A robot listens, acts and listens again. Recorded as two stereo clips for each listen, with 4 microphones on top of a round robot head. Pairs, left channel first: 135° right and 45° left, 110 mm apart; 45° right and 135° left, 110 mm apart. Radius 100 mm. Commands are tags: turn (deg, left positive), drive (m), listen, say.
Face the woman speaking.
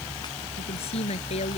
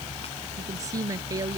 <turn deg="-165"/>
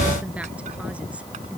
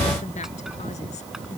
<listen/>
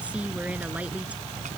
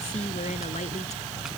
<turn deg="-30"/>
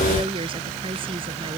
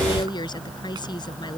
<say>Facing the woman speaking.</say>